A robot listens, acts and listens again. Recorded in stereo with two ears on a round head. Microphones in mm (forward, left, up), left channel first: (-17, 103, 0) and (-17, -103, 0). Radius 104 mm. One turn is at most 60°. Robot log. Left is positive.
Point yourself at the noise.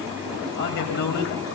note: The man speaking: about 50° left or 130° left.
cmd yaw +50
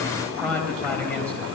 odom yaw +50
note: So it is at 10° left.
cmd yaw +10
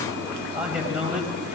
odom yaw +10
end: Facing the man speaking.